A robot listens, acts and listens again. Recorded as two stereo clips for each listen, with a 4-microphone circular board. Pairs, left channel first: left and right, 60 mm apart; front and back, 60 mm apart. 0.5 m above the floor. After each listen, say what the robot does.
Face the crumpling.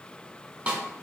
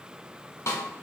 Keep listening.
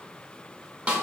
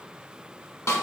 Keep listening.
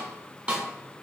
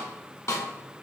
I can't make out crumpling, only a snare drum.